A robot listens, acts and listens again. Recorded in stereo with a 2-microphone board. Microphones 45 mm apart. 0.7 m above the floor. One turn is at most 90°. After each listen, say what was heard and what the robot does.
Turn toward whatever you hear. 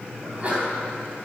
The sneeze: about 30° right or 150° right. Turn 30° right.
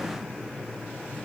Keep listening.
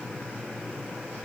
I heard a sneeze, but can't make it out now. It was about straight ahead or 120° right.